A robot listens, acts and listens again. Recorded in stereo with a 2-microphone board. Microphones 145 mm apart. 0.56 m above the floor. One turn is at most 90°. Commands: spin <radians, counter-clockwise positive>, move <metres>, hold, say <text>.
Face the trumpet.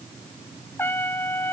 spin 0.26
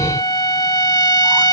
spin 1.57
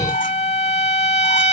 spin 0.96
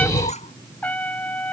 spin 0.17
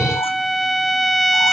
say Facing the trumpet.